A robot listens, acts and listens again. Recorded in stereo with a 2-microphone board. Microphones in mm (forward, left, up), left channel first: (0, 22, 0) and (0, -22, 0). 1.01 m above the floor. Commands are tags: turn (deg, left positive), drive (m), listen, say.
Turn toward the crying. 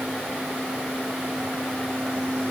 <listen/>
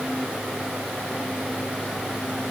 <listen/>
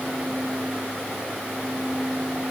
<say>I can't make out crying to turn to.</say>